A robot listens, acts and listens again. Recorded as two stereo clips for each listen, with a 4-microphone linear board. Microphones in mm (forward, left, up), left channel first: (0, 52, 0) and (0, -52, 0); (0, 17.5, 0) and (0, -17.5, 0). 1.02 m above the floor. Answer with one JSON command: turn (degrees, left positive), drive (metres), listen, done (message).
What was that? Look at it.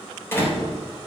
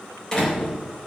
{"turn": 20}
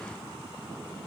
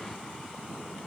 {"listen": true}
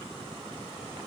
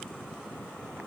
{"done": "I heard a door slam, but can't make it out now. It was about straight ahead or 140° left."}